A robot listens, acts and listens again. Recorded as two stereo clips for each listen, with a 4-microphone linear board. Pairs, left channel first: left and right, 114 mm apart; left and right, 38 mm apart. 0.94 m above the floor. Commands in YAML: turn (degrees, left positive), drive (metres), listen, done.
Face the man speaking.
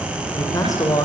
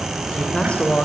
turn: 30
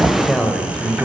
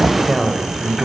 done: "Found it: a man speaking, straight ahead."